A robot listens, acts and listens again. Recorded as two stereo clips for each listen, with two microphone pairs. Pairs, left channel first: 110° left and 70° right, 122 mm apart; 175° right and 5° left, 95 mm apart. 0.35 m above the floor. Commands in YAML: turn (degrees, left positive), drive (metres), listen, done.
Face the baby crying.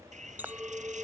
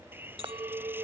listen: true
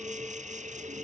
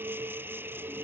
listen: true
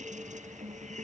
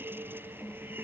done: "I can't make out a baby crying to turn to."